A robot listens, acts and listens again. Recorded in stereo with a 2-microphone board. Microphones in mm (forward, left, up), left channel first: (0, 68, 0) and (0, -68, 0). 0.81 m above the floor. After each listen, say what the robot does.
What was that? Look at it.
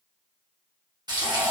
Turn 30° right.
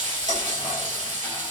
Turn 120° right.
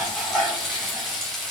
Found it: frying, straight ahead.